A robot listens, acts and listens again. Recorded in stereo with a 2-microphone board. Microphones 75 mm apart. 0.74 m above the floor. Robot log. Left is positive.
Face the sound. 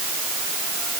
cmd idle
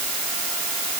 cmd idle
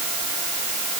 end: I can't make out anything.